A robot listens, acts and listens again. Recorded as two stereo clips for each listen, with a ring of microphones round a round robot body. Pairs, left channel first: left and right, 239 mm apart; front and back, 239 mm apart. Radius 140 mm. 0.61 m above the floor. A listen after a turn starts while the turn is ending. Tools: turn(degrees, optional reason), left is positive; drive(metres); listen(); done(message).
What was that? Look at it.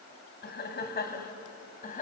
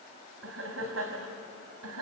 turn(degrees=145, reason="The laughter: 145° left.")
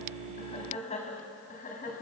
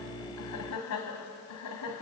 turn(degrees=30, reason="The laughter is now 30° left.")
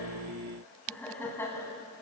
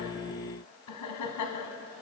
turn(degrees=10, reason="The laughter is now 10° left.")
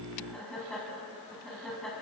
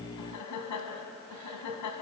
done("Facing the laughter.")